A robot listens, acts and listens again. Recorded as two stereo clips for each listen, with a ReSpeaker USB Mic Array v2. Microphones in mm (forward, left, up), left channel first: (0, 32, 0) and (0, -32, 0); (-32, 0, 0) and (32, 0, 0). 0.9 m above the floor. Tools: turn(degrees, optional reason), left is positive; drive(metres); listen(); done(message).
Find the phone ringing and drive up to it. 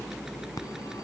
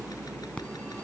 turn(degrees=110, reason="The phone ringing: 110° left.")
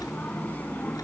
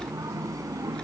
turn(degrees=25, reason="The phone ringing is now 25° left.")
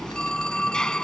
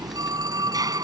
turn(degrees=10, reason="The phone ringing is now 10° left.")
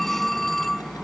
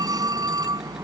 drive(metres=1.0)
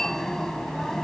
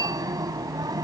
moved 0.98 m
drive(metres=1.0)
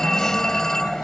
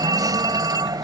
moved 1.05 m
drive(metres=1.0)
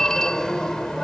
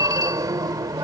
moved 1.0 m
turn(degrees=10, reason="The phone ringing is now 10° left.")
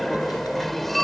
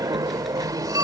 drive(metres=1.0)
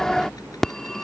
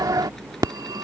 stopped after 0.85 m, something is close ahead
done("Arrived at the phone ringing, straight ahead.")